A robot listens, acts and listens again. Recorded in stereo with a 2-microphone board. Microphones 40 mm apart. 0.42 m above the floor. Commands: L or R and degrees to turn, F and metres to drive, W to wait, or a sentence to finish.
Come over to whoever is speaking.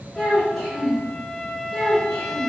L30
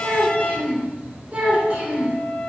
R25
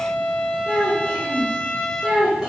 F1.0
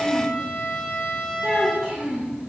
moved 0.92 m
R10
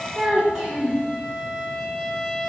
F1.0
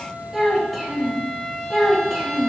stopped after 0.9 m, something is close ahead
I am next to the child speaking.